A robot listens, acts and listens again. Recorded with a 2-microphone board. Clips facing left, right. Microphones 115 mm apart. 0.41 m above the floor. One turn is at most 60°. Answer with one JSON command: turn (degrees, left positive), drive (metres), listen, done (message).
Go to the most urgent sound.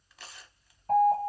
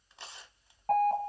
{"turn": -60}
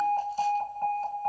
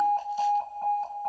{"drive": 1.0}
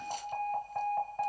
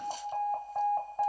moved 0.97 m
{"turn": -10}
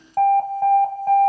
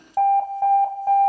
{"drive": 1.0}
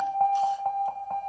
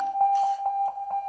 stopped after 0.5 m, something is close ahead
{"done": "Arrived at the alarm, straight ahead."}